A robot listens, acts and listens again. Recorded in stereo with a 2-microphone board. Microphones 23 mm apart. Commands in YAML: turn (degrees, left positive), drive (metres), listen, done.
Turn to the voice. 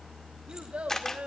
turn: -60
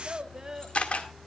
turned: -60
turn: -30
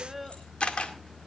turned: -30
done: "Facing the child speaking, 1 to 2 m away."